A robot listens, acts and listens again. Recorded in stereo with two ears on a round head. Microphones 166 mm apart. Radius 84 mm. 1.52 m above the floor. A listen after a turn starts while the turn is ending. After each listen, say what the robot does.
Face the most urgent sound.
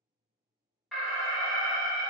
Turn 30° left.
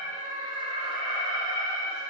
Turn 30° right.
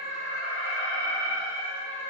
Turn 15° left.
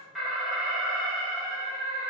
Found it: an alarm, straight ahead, under 1 m away.